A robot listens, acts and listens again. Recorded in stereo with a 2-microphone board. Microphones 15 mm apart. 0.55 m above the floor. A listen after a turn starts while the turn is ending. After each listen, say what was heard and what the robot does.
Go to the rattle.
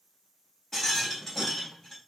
The rattle: about 25° left or 155° left. Turn 25° left.
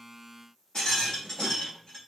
So it is at 130° left. Turn 130° left.
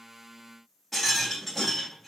Drive 1.0 m forward.
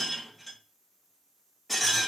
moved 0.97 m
Drive 1.0 m forward.
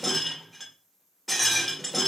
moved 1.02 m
Drive 1.0 m forward.
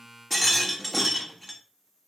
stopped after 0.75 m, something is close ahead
I am next to the rattle.